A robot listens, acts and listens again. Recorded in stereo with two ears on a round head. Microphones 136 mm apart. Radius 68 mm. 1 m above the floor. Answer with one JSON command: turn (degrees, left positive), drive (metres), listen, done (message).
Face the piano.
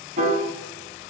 {"turn": -45}
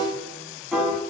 {"done": "Facing the piano."}